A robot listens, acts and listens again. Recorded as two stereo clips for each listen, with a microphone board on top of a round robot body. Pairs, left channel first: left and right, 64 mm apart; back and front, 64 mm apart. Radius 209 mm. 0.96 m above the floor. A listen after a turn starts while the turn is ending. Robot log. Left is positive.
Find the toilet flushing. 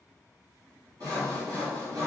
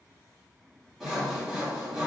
cmd idle
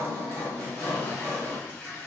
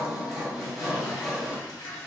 note: The toilet flushing: 160° left.
cmd yaw +160
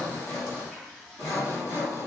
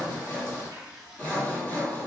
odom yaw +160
end: Facing the toilet flushing, 1 to 2 m away.